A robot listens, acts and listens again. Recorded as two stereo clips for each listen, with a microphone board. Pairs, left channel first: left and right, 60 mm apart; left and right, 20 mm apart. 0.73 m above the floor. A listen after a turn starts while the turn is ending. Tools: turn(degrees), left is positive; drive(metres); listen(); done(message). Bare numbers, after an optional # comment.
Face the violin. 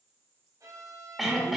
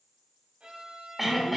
turn(-90)
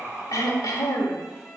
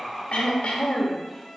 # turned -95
done("Found it: a violin, straight ahead, 2 to 4 m away.")